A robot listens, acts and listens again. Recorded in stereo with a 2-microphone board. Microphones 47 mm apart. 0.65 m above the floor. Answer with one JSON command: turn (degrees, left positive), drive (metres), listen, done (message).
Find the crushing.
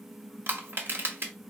{"turn": -55}
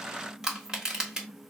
{"turn": -15}
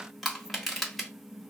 {"done": "Facing the crushing."}